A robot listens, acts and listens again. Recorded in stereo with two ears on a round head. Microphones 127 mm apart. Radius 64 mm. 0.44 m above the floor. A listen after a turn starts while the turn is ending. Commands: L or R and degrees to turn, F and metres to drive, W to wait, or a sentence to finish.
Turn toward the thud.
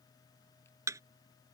R20
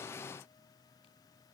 W
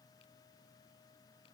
I heard a thud, but can't make it out now. It was about straight ahead or 140° right.